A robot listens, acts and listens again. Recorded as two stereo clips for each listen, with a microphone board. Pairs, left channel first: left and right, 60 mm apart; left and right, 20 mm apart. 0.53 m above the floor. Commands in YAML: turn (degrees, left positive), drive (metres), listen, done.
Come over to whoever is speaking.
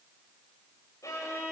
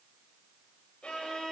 listen: true
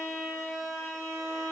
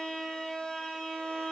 listen: true
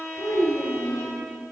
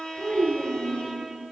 turn: 50
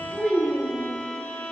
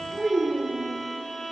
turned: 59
turn: -10
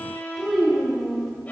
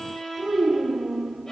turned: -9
drive: 1.0
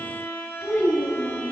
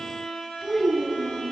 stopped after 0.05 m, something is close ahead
done: "Something is in my way. I am facing the child speaking but have not reached it."